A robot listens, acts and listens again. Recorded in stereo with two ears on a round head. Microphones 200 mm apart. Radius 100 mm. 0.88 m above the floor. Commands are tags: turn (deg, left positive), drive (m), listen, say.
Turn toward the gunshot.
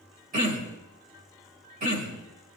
<listen/>
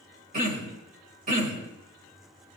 <listen/>
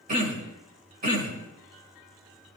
<say>I can't make out a gunshot, only throat clearing.</say>